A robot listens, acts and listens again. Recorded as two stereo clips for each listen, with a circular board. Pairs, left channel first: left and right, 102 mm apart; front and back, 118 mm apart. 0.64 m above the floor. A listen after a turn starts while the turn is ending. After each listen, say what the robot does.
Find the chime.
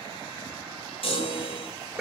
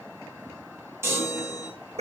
Turn 110° left.
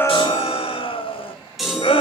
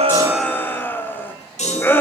Facing the chime.